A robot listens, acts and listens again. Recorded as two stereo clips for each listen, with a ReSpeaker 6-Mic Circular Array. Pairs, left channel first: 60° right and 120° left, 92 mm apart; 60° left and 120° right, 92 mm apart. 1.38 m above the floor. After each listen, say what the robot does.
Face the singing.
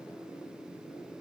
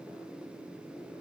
Keep listening.
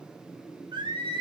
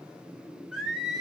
Turn 150° left.
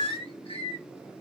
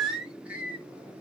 Turn 45° right.
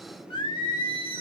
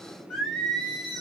Turn 30° right.
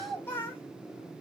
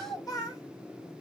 Found it: singing, straight ahead.